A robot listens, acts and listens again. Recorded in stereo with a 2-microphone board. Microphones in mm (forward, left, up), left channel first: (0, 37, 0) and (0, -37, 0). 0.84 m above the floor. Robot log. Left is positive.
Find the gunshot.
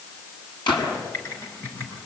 cmd yaw +90
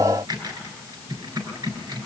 end: I heard a gunshot from this way, but can't make it out now.